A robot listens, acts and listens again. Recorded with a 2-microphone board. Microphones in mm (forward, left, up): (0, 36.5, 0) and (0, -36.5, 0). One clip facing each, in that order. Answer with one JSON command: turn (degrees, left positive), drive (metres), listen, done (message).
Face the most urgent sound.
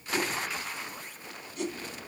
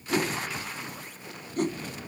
{"listen": true}
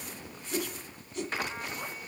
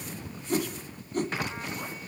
{"listen": true}
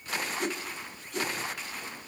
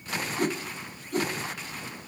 {"done": "I can't make out anything urgent to turn to."}